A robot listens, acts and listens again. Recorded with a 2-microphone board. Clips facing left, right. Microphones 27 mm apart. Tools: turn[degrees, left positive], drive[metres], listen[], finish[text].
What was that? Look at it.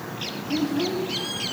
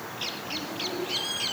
Action: turn[90]
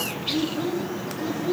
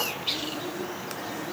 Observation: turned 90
Thought: So it is at 10° left.
Action: turn[10]
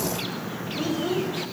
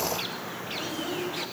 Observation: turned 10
Thought: The child speaking is now 10° left.
Action: turn[10]
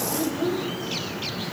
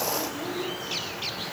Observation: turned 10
Action: finish[Found it: a child speaking, straight ahead, over 4 m away.]